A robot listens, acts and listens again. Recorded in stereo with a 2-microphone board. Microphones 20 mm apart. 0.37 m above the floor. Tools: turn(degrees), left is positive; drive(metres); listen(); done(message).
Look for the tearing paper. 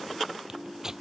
turn(degrees=-30)
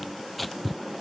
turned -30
done("Facing the tearing paper.")